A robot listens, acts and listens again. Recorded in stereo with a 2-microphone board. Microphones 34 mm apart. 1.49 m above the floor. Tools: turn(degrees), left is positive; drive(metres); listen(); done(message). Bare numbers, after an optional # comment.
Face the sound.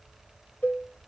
# The cowbell: about 75° left or 105° left.
turn(75)
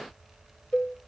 # So it is at 25° left.
turn(25)
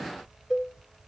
done("Found it: a cowbell, straight ahead.")